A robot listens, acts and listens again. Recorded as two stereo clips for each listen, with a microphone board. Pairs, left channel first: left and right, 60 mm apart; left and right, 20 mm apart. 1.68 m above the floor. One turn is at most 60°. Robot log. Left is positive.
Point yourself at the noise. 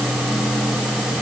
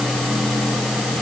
cmd idle
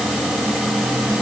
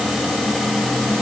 cmd idle
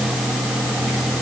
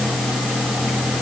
end: I can't make out anything.